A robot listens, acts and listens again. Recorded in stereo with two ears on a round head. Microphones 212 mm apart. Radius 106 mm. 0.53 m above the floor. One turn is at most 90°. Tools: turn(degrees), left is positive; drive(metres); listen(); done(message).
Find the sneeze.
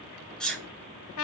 turn(degrees=30)
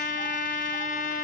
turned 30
listen()
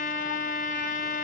done("I heard a sneeze, but can't make it out now. It was about 25° right or 145° left.")